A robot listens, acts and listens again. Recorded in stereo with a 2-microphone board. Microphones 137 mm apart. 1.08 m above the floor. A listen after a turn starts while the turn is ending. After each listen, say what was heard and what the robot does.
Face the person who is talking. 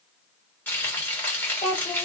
The child speaking: about 55° left or 125° left. Turn 55° left.
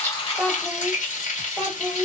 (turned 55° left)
Found it: a child speaking, straight ahead.